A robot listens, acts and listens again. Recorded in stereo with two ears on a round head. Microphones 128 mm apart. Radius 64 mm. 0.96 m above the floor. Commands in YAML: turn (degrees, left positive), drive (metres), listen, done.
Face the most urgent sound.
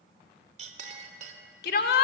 turn: 75
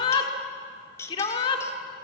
turn: 35
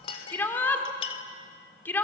turn: 15
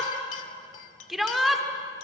done: "Found it: a shout, straight ahead."